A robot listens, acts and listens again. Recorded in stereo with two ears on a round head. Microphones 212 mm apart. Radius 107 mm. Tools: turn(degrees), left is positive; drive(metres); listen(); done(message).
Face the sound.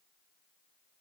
listen()
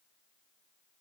listen()
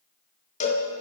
turn(degrees=30)
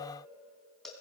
listen()
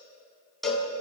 done("Found it: a cowbell, straight ahead.")